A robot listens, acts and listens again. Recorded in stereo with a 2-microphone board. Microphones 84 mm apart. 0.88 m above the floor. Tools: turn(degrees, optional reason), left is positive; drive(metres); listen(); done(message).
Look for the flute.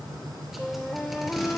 turn(degrees=30)
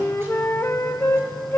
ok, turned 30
turn(degrees=140, reason="So it is at 140° left.")
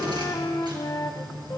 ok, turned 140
turn(degrees=55, reason="The flute is now 55° left.")
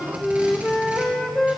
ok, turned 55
turn(degrees=10, reason="The flute is now 10° left.")
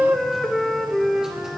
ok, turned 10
done("Found it: a flute, straight ahead, under 1 m away.")